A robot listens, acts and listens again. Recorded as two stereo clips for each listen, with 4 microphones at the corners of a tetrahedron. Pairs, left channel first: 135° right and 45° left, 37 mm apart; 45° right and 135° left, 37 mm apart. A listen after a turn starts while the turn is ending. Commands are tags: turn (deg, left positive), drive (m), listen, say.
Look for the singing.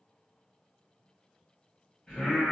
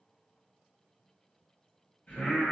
<turn deg="-60"/>
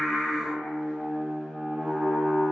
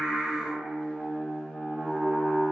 <turn deg="55"/>
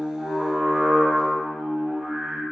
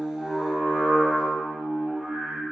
<turn deg="40"/>
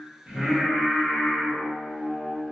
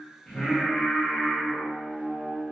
<turn deg="-15"/>
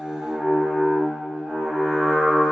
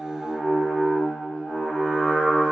<say>Facing the singing.</say>